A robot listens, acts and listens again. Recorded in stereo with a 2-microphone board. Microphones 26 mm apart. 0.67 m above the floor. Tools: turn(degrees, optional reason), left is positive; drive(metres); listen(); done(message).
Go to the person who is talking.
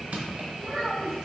turn(degrees=-25, reason="The child speaking: about 25° right or 155° right.")
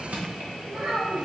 turn(degrees=-130, reason="So it is at 130° right.")
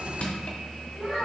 turn(degrees=15, reason="The child speaking is now 15° left.")
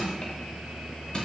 listen()
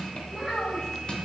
drive(metres=1.0)
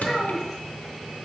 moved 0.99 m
turn(degrees=-10, reason="The child speaking is now 10° right.")
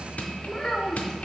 drive(metres=1.0)
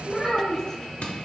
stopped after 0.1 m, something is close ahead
done("I am next to the child speaking.")